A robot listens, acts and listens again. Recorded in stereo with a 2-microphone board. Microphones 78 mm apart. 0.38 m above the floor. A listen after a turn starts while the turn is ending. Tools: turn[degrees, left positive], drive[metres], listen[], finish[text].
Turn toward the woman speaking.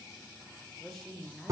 Action: turn[30]
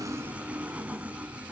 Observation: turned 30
Action: listen[]
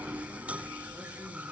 Action: listen[]
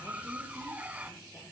Action: finish[I heard a woman speaking, but can't make it out now. It was about 25° right or 145° left.]